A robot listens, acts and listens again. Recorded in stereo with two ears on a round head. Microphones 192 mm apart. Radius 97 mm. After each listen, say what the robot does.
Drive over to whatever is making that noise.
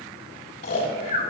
Turn 45° left.
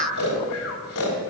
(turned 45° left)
Turn 90° left.
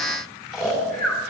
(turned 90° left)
Drive 1.0 m forward.
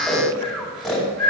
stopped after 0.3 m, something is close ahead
Blocked. The snoring is further on, straight ahead.